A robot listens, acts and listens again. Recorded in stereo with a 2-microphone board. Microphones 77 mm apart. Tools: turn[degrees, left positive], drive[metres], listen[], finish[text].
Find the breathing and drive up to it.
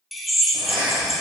Action: turn[-90]
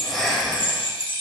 Action: drive[1.0]
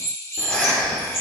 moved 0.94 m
Thought: The breathing is now 15° left.
Action: turn[15]
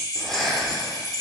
Action: drive[1.0]
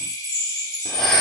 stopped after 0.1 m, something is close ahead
Action: listen[]
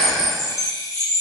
Action: listen[]
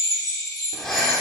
Action: finish[Arrived at the breathing, straight ahead.]